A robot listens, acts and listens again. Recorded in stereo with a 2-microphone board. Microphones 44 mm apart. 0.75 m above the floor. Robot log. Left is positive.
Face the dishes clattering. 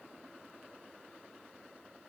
cmd idle
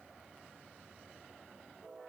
cmd idle
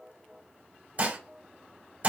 note: The dishes clattering: about 35° right or 145° right.
cmd yaw -35
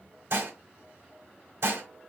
note: So it is at 105° right.
cmd yaw -105
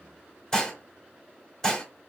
note: The dishes clattering is now 15° left.
cmd yaw +15
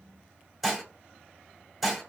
end: Found it: dishes clattering, straight ahead, 1 to 2 m away.